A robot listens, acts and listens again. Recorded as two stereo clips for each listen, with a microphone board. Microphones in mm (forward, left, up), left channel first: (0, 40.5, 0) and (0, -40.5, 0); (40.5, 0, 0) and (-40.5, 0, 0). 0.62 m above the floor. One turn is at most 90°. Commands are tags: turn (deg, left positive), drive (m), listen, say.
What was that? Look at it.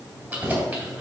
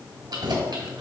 <turn deg="-90"/>
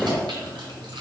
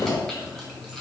<turn deg="-90"/>
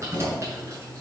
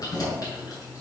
<turn deg="-40"/>
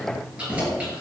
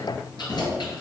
<turn deg="-20"/>
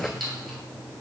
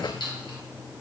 <say>Found it: keys jangling, straight ahead, 2 to 4 m away.</say>